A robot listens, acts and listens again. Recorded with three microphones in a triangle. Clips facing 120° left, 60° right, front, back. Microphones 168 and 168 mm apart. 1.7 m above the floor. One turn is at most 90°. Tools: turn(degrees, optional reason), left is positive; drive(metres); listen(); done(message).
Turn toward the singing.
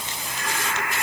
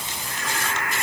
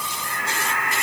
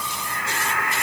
turn(degrees=35, reason="The singing: 35° left.")
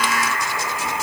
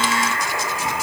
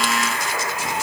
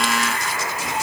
turn(degrees=-10, reason="The singing is now 10° right.")
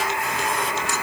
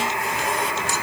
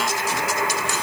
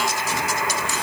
done("Found it: singing, straight ahead.")